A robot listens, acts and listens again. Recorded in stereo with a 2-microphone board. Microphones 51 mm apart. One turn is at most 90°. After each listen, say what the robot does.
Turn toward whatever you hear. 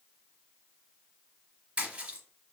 Turn 25° right.
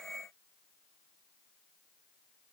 Keep listening.
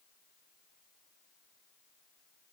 I heard a splash, but can't make it out now. It was about straight ahead or 130° right.